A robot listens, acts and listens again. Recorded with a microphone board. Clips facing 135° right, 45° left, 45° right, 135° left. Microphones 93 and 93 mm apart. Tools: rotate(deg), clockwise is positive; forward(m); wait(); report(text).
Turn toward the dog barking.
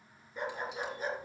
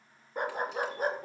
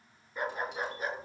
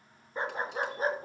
rotate(-80)
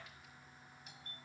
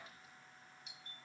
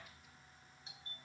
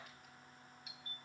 wait()
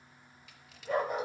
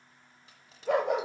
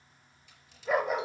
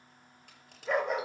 rotate(-45)
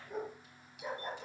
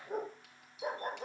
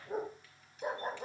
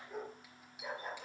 report("Facing the dog barking, 2 to 4 m away.")